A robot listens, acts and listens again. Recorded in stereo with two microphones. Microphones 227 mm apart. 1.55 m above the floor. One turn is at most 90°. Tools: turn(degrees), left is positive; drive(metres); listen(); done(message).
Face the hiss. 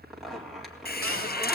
turn(degrees=45)
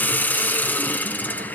turn(degrees=10)
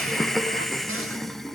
done("Facing the hiss, under 1 m away.")